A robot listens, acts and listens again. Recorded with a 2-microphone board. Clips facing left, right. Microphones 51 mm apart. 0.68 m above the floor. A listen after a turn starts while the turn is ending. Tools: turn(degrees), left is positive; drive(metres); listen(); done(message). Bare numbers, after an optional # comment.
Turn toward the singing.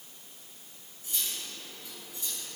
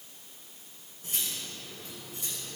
listen()
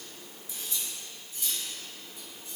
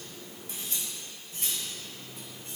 listen()
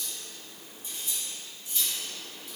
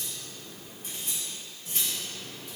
done("I can't make out singing, only cutlery clinking.")